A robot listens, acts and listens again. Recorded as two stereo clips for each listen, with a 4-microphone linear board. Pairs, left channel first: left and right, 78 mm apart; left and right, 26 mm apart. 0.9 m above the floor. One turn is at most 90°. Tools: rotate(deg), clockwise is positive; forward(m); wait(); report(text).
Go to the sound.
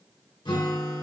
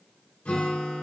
rotate(-90)
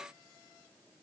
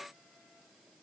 wait()
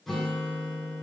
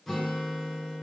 forward(1.0)
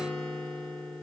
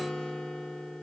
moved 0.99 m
rotate(-10)
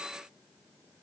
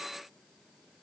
wait()
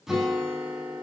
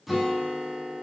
forward(1.0)
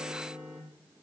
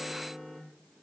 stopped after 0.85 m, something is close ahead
rotate(15)
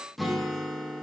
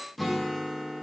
report("Arrived at the guitar, straight ahead.")